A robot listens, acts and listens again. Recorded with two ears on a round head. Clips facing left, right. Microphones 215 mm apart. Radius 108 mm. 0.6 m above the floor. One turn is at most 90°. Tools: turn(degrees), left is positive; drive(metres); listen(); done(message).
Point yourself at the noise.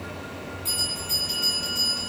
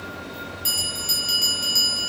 turn(degrees=-90)
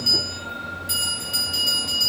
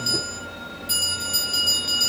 done("Facing the bell, 1 to 2 m away.")